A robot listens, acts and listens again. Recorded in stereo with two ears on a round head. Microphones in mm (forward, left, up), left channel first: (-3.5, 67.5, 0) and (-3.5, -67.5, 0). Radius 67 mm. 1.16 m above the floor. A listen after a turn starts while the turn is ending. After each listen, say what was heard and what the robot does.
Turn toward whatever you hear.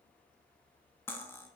Turn 30° left.
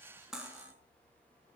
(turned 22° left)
Facing the cutlery clinking, under 1 m away.